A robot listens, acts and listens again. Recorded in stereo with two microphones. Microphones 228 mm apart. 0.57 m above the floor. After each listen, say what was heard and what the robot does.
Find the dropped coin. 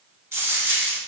Turn 30° right.
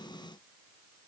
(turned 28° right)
Keep listening.
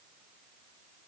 I heard a dropped coin, but can't make it out now. It was about 15° left or 140° right.